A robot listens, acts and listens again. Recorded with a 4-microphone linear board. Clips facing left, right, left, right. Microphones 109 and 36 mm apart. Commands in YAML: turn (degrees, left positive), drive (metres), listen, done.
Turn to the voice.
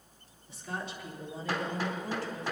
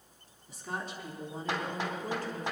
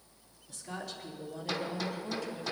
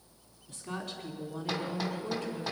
turn: -50
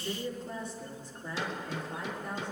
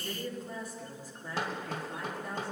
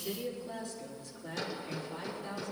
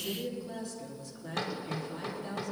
done: "Facing the woman speaking, over 4 m away."